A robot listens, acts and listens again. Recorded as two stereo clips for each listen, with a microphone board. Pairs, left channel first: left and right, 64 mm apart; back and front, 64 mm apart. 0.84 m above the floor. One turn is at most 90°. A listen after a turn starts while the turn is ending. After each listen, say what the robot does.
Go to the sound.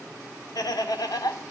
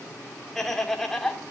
Turn 90° left.
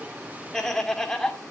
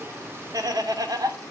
Turn 10° left.
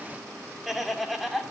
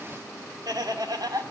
Drive 1.0 m forward.
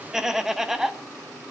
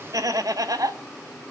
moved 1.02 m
Drive 1.0 m forward.
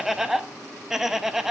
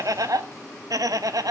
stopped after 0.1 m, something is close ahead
I am next to the laughter.